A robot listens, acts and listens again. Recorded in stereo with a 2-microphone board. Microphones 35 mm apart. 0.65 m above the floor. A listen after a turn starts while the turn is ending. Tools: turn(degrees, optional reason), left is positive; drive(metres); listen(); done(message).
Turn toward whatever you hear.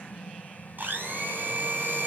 turn(degrees=-70, reason="The blender: about 70° right or 110° right.")
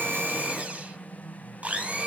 turn(degrees=-45, reason="So it is at 45° right.")
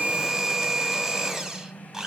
turn(degrees=-15, reason="The blender is now 15° right.")
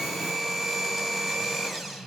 done("Found it: a blender, straight ahead.")